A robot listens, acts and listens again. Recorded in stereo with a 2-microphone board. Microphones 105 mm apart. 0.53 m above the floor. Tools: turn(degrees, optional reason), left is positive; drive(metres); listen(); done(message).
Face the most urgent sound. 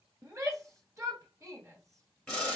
turn(degrees=-30, reason="The shout: about 30° right or 150° right.")
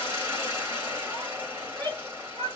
turn(degrees=-115, reason="So it is at 115° right.")
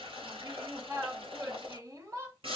turn(degrees=-35, reason="The shout is now 35° right.")
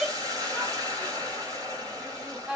done("Found it: a shout, straight ahead.")